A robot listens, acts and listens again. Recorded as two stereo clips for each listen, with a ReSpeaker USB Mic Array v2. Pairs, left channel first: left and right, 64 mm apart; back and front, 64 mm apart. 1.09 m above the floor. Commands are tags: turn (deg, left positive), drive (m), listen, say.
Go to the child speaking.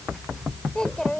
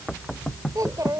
<turn deg="10"/>
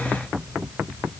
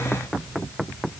<listen/>
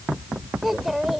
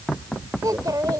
<drive m="1.0"/>
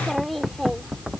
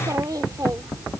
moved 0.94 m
<drive m="1.0"/>
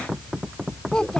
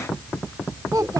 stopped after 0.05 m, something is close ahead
<turn deg="10"/>
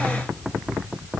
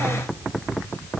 <listen/>
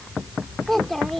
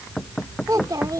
<say>Something is in my way. I am facing the child speaking but have not reached it.</say>